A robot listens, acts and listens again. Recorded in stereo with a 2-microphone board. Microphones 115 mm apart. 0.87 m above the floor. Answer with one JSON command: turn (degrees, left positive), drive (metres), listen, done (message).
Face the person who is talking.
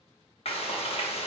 {"listen": true}
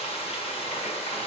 {"listen": true}
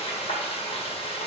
{"done": "I can't make out anyone speaking, only frying."}